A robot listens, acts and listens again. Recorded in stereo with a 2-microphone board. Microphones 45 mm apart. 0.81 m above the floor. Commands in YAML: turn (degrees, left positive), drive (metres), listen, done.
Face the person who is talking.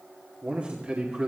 turn: -30
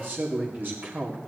turn: -120
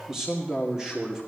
turn: -15
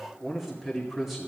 done: "Facing the man speaking, 2 to 4 m away."